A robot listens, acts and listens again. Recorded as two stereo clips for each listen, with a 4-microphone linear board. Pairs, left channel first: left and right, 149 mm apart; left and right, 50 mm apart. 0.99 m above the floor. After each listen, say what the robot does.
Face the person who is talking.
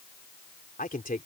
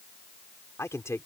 Turn 70° left.
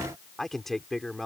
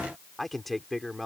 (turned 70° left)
Found it: a man speaking, straight ahead.